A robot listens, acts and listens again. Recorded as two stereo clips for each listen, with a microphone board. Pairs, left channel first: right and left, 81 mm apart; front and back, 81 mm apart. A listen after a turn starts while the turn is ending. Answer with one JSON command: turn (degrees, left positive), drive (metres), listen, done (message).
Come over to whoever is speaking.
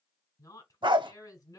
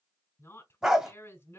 {"turn": -55}
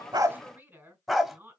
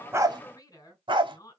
{"turn": 30}
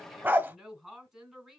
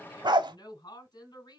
{"turn": 10}
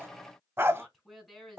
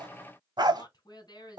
{"drive": 1.0}
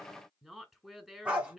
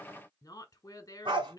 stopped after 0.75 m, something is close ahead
{"turn": 10}
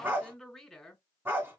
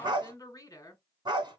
{"done": "I am next to the woman speaking."}